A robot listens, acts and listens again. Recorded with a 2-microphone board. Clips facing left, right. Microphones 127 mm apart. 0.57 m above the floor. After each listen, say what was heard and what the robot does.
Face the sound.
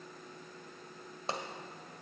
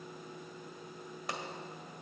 The pop: about 30° left or 150° left. Turn 30° left.
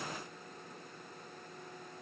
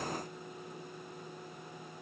Keep listening.
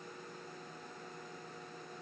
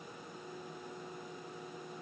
I heard a pop, but can't make it out now. It was about straight ahead or 120° left.